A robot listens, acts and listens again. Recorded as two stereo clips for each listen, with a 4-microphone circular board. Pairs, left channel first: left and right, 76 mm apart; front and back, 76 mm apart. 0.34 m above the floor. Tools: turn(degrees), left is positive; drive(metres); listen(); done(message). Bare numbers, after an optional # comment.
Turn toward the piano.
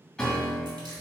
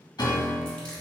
# The piano: 10° left.
turn(10)
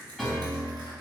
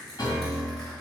done("Found it: a piano, straight ahead, 1 to 2 m away.")